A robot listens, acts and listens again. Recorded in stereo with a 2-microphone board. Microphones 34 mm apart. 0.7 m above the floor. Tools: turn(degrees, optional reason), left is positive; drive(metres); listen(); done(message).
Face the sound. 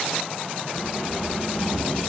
turn(degrees=30, reason="The keys jangling: about 30° left or 150° left.")
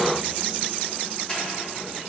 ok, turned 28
listen()
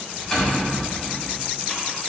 turn(degrees=10, reason="So it is at 10° left.")
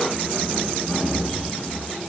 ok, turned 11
done("Facing the keys jangling, over 4 m away.")